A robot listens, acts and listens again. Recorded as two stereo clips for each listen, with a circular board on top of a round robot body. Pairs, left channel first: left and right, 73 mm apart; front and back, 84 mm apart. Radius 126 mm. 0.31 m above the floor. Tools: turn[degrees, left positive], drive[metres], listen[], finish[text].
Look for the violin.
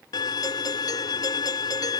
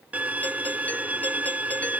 Thought: The violin: 110° left.
Action: turn[110]
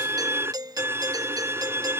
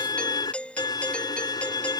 Thought: The violin is now 35° right.
Action: turn[-35]
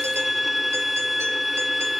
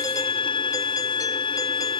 Action: finish[Found it: a violin, straight ahead.]